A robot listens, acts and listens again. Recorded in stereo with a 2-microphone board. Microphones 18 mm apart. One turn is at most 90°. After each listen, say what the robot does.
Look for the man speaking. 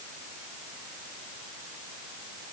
Keep listening.
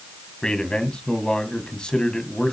Turn 55° left.
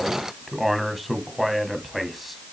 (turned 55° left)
Facing the man speaking, 2 to 4 m away.